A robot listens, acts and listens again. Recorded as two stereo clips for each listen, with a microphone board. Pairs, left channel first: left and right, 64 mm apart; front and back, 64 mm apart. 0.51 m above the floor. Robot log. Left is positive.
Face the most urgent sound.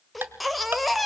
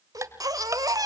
note: The baby crying: straight behind.
cmd yaw +180
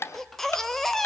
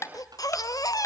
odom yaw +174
end: Found it: a baby crying, straight ahead, 1 to 2 m away.